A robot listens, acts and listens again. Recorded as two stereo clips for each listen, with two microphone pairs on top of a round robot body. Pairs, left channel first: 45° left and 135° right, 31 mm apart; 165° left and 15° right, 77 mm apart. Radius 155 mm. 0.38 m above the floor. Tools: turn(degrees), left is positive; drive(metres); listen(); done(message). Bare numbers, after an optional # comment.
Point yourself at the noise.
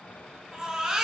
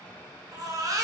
# The baby crying: 65° right.
turn(-65)
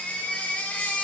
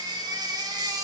# The baby crying is now 15° left.
turn(15)
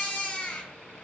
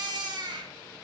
done("Facing the baby crying, 2 to 4 m away.")